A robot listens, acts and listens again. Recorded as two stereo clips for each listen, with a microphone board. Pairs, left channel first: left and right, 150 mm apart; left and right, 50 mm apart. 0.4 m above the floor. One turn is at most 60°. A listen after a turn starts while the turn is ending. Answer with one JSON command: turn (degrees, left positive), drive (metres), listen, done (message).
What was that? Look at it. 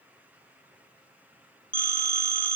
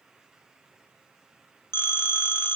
{"turn": 60}
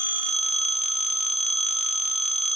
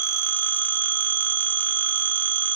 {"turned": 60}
{"turn": 50}
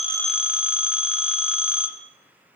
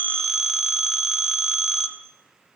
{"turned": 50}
{"turn": -10}
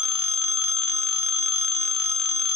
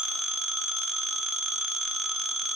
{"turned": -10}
{"done": "Found it: a phone ringing, straight ahead."}